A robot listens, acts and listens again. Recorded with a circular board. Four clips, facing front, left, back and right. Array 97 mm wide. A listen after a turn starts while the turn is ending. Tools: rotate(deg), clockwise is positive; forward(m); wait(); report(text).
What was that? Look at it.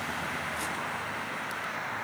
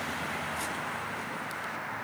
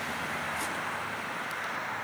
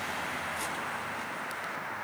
wait()
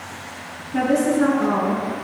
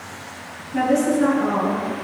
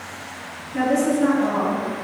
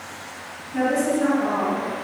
rotate(-10)
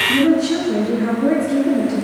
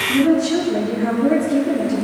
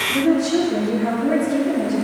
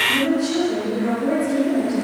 rotate(-10)
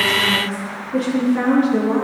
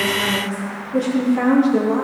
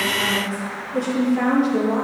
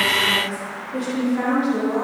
report("Facing the woman speaking.")